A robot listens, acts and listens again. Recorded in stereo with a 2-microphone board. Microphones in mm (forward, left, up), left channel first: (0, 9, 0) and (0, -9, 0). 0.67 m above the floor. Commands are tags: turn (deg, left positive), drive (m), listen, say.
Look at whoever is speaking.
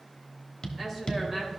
<turn deg="-30"/>
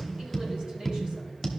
<listen/>
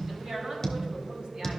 <turn deg="-120"/>
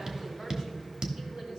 <turn deg="-55"/>
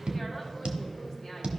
<say>Found it: a woman speaking, straight ahead, over 4 m away.</say>